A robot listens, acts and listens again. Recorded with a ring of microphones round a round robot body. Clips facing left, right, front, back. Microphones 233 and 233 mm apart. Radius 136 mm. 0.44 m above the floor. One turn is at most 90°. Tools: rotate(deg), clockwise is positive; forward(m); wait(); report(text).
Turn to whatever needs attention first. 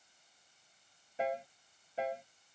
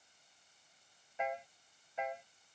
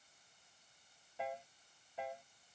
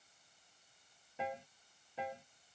wait()
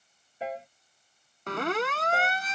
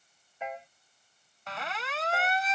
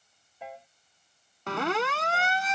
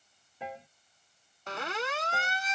rotate(-40)
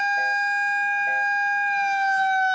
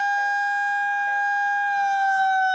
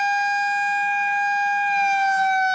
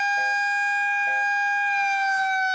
rotate(-20)
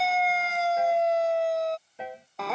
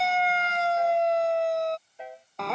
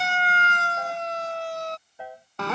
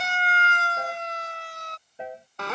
report("Found it: a siren, straight ahead.")